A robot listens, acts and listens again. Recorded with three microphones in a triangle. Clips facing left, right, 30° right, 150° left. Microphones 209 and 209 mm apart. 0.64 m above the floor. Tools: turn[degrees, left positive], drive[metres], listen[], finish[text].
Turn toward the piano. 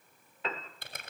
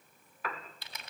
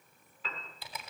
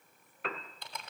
Thought: The piano: 150° left.
Action: turn[150]
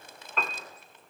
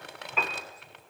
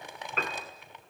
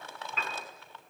Action: finish[Found it: a piano, straight ahead.]